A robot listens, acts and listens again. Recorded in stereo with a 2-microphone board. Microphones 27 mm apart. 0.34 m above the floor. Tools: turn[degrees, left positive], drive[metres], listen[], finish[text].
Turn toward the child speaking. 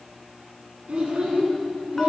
Thought: The child speaking: about 50° right or 130° right.
Action: turn[-50]
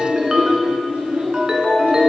Thought: So it is at 75° right.
Action: turn[-75]
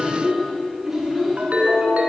Thought: The child speaking is now 10° right.
Action: turn[-10]
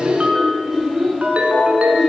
Action: finish[Found it: a child speaking, straight ahead.]